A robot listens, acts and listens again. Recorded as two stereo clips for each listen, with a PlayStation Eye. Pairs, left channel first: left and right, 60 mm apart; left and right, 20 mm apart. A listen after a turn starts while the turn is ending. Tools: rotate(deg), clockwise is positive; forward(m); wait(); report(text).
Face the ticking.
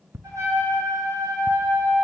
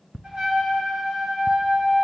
rotate(40)
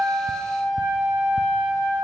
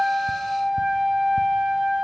wait()
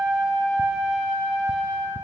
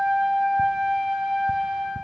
wait()
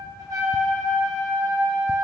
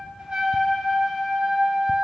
report("I heard ticking, but can't make it out now. It was about straight ahead or 100° right.")